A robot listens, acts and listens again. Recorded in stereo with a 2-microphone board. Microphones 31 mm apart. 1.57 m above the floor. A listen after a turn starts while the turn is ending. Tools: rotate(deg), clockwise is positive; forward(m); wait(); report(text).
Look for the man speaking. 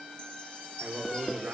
rotate(90)
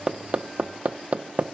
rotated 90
wait()
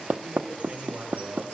report("Facing the man speaking.")